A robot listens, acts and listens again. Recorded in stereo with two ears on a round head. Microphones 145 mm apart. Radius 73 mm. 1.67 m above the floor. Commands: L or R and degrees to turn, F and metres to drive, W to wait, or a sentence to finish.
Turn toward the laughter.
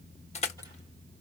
W
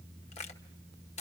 W
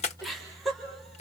L30
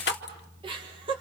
R30
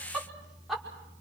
Found it: laughter, straight ahead, over 4 m away.